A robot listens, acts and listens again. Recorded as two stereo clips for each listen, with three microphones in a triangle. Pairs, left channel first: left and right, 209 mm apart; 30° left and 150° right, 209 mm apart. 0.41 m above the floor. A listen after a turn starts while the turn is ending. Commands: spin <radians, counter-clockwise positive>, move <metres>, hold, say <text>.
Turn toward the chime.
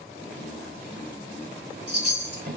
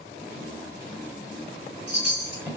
spin -2.09
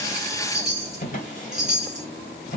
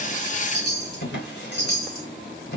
say Facing the chime.